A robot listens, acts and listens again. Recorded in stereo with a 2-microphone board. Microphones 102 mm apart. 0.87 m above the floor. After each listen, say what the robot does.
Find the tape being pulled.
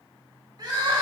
Keep listening.
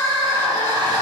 Keep listening.
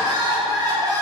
I can't make out tape being pulled to turn to.